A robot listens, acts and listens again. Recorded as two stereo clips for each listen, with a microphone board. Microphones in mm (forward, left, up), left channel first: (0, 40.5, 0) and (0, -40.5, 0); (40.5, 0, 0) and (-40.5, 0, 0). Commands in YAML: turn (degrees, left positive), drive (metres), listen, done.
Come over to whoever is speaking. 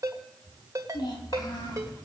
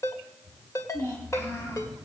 turn: 55
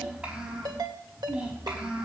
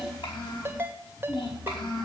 turn: -15
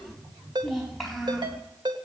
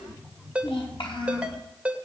drive: 1.0
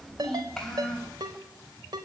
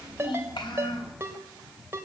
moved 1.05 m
drive: 1.0
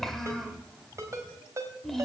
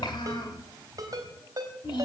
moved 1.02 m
drive: 1.0
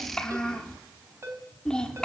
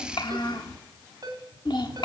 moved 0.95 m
turn: 10
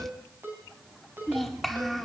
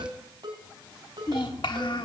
drive: 1.0
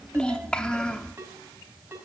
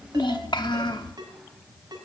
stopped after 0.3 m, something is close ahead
turn: 10
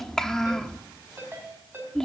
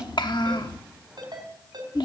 done: "Arrived at the child speaking, straight ahead."